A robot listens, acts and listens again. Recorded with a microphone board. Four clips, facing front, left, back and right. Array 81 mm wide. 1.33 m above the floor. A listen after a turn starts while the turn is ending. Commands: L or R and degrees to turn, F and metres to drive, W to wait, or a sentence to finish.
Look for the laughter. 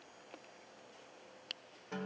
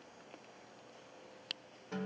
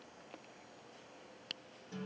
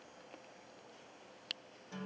W
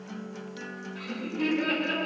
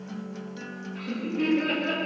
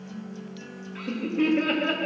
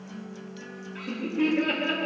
L180
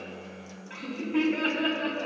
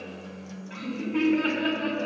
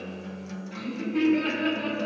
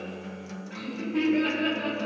Facing the laughter.